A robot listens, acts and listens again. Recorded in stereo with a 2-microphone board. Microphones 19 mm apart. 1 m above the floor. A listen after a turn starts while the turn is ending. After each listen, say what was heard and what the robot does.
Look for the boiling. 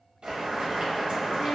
The boiling: about 60° right or 120° right. Turn 60° right.
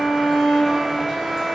Keep listening.
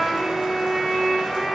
Keep listening.
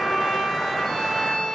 I heard boiling, but can't make it out now. It was about straight ahead or 60° right.